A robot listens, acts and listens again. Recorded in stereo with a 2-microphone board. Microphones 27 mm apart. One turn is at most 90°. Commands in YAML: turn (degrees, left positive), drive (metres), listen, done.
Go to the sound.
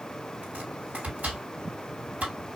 turn: -60
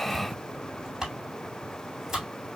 turn: -15
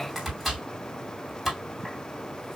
drive: 1.0
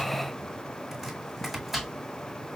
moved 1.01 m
drive: 1.0
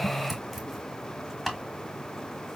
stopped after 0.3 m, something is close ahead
done: "I am next to the chopping."